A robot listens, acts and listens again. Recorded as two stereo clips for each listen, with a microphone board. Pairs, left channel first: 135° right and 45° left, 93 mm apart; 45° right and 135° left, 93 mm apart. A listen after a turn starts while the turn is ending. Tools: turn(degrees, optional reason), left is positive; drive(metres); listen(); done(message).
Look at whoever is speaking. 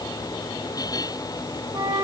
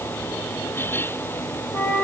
listen()
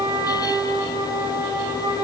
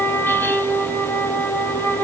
listen()
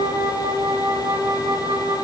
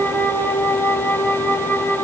done("I can't make out anyone speaking, only a flute.")